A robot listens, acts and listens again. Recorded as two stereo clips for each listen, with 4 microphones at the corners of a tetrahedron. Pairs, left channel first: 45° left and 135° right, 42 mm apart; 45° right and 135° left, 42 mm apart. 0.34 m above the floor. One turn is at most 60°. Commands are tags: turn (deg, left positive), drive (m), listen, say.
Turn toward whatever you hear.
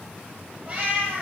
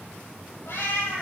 <turn deg="-60"/>
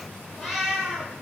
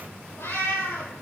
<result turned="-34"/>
<turn deg="-55"/>
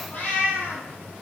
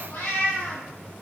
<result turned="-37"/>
<turn deg="-20"/>
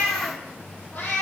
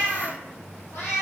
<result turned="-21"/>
<say>Found it: a cat meowing, straight ahead, over 4 m away.</say>